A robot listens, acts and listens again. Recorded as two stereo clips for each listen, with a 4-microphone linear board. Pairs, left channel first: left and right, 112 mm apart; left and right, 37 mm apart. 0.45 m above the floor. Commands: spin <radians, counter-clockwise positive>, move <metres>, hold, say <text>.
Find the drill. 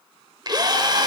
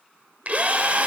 spin -0.70
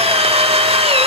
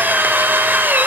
spin -1.66
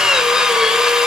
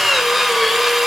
say Found it: a drill, straight ahead, under 1 m away.